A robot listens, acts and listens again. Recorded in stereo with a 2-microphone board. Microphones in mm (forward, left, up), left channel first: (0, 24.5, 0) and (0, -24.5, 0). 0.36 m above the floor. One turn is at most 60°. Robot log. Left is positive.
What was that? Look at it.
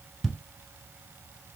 cmd yaw +30
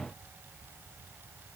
cmd idle
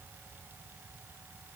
end: I heard a thud, but can't make it out now. It was about 30° right or 150° left.